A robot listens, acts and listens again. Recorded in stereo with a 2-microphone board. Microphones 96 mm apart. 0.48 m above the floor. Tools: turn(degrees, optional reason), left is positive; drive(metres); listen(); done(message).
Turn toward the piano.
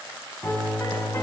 turn(degrees=30, reason="The piano: about 30° left or 150° left.")
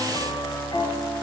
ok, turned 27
turn(degrees=125, reason="So it is at 125° left.")
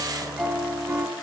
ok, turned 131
turn(degrees=-10, reason="The piano is now 10° right.")
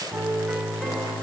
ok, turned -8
done("Facing the piano, 2 to 4 m away.")